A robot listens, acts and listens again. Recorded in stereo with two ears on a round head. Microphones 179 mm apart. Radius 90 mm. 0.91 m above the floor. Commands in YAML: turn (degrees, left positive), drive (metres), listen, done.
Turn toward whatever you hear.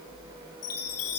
turn: 90
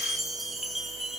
done: "Facing the chime, 2 to 4 m away."